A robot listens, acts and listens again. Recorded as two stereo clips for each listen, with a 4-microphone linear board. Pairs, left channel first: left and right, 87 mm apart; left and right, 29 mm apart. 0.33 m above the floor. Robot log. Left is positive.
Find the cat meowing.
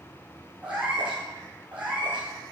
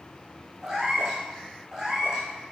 cmd yaw -30
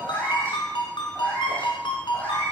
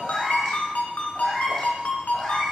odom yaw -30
note: So it is at 20° left.
cmd yaw +20
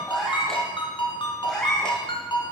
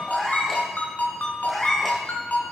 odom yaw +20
note: The cat meowing is now 10° left.
cmd yaw +10
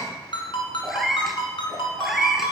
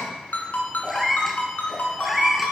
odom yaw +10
end: Facing the cat meowing, 1 to 2 m away.